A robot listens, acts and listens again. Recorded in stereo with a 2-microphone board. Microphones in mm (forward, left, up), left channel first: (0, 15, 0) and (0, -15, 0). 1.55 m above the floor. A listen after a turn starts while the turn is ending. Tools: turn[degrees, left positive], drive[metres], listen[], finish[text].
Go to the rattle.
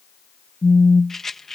Action: turn[30]
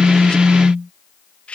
Thought: So it is at 135° left.
Action: turn[135]
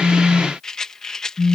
Thought: The rattle is now 20° left.
Action: turn[20]
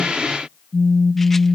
Action: listen[]
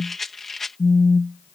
Thought: The rattle is now 10° left.
Action: turn[10]
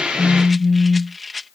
Action: drive[1.0]
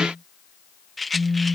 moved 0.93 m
Action: drive[1.0]
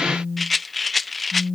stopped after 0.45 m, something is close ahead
Action: finish[I am next to the rattle.]